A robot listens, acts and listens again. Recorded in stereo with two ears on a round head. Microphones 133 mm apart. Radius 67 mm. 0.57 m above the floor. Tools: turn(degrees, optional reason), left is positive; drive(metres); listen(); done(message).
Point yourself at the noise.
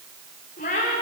turn(degrees=55, reason="The cat meowing: about 55° left or 125° left.")
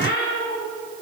turn(degrees=70, reason="So it is at 70° left.")
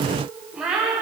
done("Facing the cat meowing, over 4 m away.")